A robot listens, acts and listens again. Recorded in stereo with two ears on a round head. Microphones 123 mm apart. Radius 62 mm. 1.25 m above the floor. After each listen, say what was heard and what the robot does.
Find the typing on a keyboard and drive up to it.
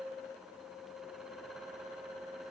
Keep listening.
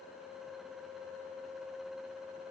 Keep listening.
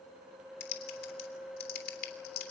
The typing on a keyboard: about 75° left or 105° left. Turn 75° left.
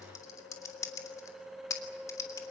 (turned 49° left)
So it is at 25° left. Turn 25° left.
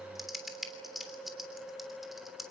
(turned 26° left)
Drive 1.0 m forward.
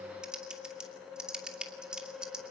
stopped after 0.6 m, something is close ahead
Blocked. The typing on a keyboard is further on, straight ahead.